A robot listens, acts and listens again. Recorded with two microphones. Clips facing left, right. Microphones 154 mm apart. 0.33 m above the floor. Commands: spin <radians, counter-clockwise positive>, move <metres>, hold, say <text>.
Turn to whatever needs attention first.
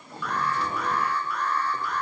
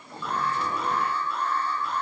spin -0.44
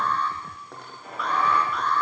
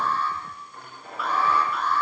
say Found it: an alarm, straight ahead.